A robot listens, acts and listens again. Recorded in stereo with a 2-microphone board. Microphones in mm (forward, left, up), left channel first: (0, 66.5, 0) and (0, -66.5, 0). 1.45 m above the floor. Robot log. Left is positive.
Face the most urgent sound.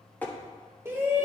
note: The shout: about 20° right or 160° right.
cmd yaw -20
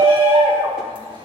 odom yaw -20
note: So it is at 140° right.
cmd yaw -140
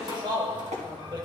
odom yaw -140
note: The shout is now 35° right.
cmd yaw -35
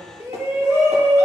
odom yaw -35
note: The shout is now 25° right.
cmd yaw -25
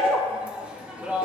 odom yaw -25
note: The shout is now 10° right.
cmd yaw -10
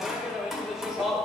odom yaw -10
end: Facing the shout, 1 to 2 m away.